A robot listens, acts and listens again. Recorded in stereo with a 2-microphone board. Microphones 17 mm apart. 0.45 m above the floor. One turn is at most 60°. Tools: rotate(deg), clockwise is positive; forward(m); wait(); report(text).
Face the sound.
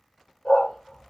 rotate(-60)
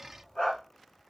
rotate(-45)
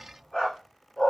rotate(-30)
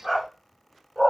rotate(-20)
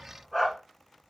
rotate(-10)
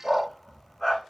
rotate(-10)
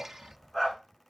report("Facing the dog barking, 1 to 2 m away.")